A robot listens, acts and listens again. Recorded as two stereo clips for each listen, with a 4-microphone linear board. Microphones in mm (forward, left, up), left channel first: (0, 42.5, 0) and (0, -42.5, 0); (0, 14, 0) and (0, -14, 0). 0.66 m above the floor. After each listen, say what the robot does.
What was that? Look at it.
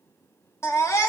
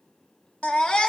Turn 35° left.
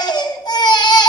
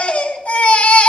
Turn 105° left.
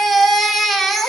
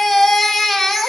Facing the baby crying.